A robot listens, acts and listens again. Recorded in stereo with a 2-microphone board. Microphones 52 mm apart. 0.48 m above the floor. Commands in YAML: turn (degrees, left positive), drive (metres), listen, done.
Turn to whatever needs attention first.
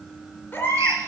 turn: 45
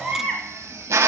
done: "Found it: a baby crying, straight ahead, 2 to 4 m away."